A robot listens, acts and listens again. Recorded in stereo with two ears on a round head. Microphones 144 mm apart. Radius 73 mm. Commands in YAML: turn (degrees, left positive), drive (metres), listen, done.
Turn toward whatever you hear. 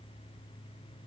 listen: true
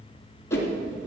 turn: 20
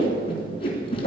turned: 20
turn: 140
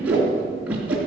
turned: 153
turn: -10
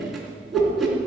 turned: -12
done: "Found it: a whoosh, straight ahead."